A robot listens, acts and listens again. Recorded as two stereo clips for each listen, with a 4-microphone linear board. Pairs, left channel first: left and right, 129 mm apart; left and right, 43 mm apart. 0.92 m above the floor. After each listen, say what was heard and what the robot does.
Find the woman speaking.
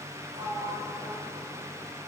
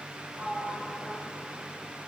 Keep listening.
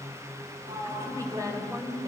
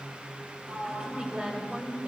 The woman speaking: about 30° right or 150° right. Turn 30° right.
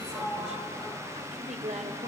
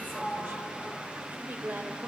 So it is at 110° right. Turn 110° right.
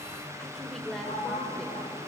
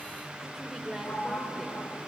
Facing the woman speaking.